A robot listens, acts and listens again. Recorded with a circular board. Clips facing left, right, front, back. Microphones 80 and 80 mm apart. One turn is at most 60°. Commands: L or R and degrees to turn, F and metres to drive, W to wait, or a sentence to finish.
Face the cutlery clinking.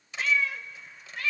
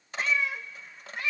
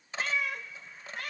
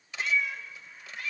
R55
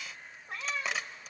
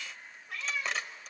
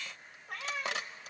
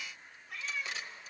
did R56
Found it: cutlery clinking, straight ahead.